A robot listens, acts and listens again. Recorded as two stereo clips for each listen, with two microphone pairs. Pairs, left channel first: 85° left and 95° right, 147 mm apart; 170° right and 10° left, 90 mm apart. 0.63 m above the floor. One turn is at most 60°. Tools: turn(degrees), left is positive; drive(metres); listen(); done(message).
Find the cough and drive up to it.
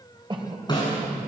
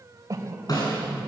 turn(degrees=-40)
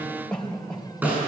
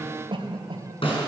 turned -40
drive(metres=1.0)
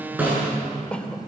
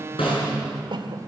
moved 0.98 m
drive(metres=1.0)
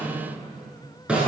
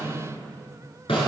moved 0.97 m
listen()
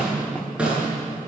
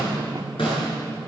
listen()
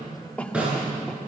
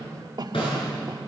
drive(metres=1.0)
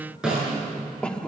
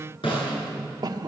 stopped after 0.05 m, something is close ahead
done("Arrived at the cough, straight ahead.")